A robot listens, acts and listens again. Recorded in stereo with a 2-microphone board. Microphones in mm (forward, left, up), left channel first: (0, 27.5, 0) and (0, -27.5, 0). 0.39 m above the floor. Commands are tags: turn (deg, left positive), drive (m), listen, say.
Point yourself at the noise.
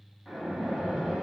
<turn deg="-30"/>
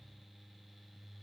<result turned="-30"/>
<listen/>
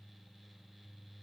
<say>I heard a splash, but can't make it out now. It was about 20° left or 140° right.</say>